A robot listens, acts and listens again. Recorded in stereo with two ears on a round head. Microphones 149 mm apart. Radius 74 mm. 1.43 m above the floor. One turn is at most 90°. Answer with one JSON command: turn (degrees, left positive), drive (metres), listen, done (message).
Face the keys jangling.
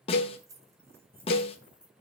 {"turn": -30}
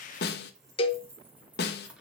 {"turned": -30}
{"turn": -30}
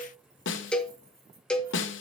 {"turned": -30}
{"listen": true}
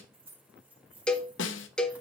{"turn": -30}
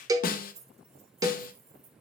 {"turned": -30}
{"turn": -90}
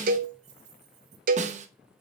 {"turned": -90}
{"turn": -40}
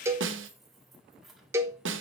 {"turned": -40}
{"done": "Facing the keys jangling."}